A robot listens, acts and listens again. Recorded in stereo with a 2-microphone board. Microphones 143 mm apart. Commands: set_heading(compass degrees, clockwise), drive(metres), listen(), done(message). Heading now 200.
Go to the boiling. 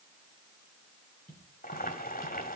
set_heading(130)
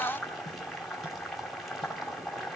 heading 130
drive(1.0)
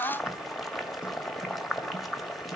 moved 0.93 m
drive(1.0)
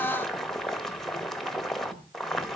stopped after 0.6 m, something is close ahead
done("I am next to the boiling.")